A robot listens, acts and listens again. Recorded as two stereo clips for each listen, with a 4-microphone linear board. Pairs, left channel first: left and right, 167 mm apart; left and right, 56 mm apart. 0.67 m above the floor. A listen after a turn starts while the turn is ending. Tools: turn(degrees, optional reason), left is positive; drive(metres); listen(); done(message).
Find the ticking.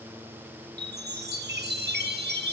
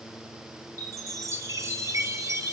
listen()
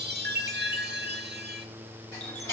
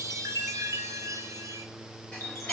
turn(degrees=20, reason="The ticking: about 20° left or 160° left.")
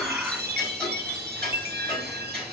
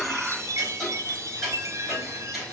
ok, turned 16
done("Facing the ticking.")